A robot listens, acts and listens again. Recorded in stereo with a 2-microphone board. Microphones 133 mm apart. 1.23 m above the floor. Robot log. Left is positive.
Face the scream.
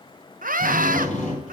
cmd yaw -90
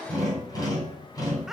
cmd idle
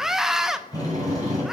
end: Found it: a scream, straight ahead.